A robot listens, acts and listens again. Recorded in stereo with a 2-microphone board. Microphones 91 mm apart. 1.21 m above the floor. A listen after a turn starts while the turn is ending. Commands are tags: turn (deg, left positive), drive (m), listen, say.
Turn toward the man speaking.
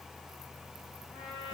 <listen/>
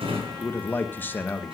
<turn deg="20"/>
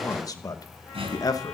<turn deg="140"/>
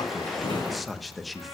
<say>Facing the man speaking.</say>